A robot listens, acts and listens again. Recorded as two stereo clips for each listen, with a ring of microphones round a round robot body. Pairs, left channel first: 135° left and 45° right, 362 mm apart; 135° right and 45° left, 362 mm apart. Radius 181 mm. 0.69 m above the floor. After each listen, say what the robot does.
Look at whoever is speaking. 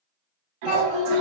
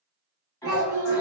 Turn 100° left.
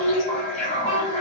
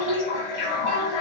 Facing the child speaking, 1 to 2 m away.